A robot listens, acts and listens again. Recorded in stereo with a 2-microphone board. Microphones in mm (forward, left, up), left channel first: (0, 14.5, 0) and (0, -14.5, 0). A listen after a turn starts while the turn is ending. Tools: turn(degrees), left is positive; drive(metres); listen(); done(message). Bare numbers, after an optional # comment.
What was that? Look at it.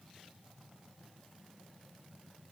listen()
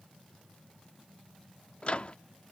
# The microwave: about 45° left or 135° left.
turn(45)
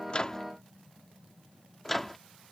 # So it is at 10° left.
turn(10)
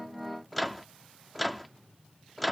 done("Facing the microwave.")